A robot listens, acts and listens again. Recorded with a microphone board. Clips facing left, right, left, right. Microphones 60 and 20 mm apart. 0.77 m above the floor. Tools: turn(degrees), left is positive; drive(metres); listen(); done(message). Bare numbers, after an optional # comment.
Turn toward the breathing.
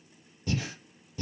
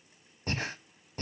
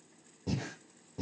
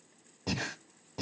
# The breathing: about 45° right or 135° right.
turn(-45)
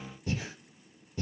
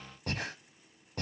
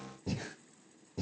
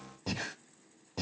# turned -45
# So it is at 75° right.
turn(-75)
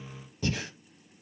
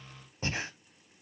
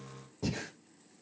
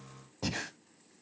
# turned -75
# The breathing is now 40° right.
turn(-40)
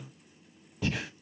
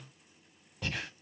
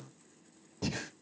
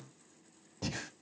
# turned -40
done("Facing the breathing, under 1 m away.")